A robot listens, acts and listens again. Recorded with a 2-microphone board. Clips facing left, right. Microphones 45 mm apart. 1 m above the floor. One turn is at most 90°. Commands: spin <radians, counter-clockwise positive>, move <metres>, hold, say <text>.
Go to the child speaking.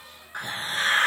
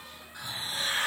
hold
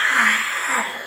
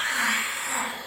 hold
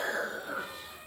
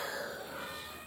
say I can't make out a child speaking to turn to.